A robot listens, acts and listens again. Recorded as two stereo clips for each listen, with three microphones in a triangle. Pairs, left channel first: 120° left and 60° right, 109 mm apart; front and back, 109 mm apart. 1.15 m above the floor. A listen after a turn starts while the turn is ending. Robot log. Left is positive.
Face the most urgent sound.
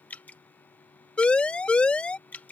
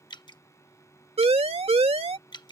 note: The siren: 160° right.
cmd yaw -160
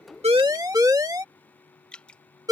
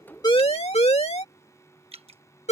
end: Found it: a siren, straight ahead.